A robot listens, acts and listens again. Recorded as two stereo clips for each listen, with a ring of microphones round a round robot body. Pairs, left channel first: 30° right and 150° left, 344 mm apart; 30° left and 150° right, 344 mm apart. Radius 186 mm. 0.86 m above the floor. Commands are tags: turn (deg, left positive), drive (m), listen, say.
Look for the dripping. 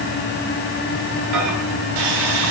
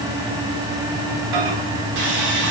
<listen/>
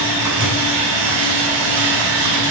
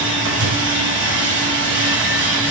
<listen/>
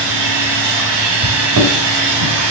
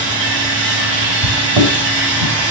<say>I can't make out dripping to turn to.</say>